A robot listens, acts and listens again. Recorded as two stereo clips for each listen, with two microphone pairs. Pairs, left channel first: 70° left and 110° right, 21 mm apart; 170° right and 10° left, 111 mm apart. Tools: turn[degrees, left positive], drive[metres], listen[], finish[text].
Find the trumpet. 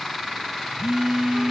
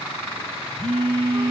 Action: listen[]
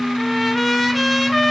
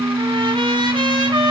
Thought: The trumpet: 25° right.
Action: turn[-25]
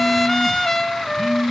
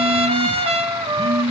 Action: finish[Found it: a trumpet, straight ahead, under 1 m away.]